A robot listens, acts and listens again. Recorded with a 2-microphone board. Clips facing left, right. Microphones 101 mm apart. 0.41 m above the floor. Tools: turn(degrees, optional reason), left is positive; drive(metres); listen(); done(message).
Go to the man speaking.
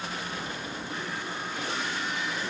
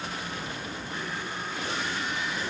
listen()
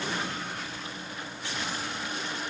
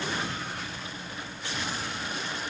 listen()
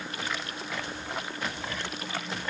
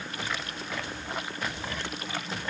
done("I can't make out a man speaking.")